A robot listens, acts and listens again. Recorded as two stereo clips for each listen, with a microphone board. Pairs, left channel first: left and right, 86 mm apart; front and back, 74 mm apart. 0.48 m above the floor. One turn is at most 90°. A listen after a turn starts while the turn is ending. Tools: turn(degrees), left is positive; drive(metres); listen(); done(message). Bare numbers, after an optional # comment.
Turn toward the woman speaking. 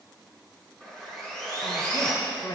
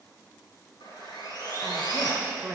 # The woman speaking: 110° left.
turn(90)
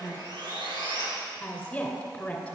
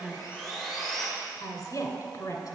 # The woman speaking is now 15° left.
turn(15)
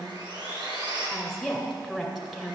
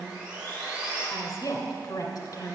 # The woman speaking is now 10° right.
turn(-10)
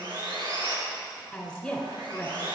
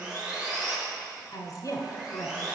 done("Found it: a woman speaking, straight ahead.")